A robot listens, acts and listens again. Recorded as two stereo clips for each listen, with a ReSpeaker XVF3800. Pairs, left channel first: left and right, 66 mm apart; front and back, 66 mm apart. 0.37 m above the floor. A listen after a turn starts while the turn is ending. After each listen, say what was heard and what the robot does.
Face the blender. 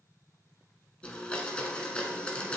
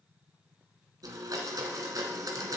The blender: 160° left. Turn 160° left.
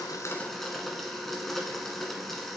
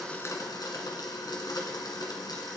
Facing the blender, 1 to 2 m away.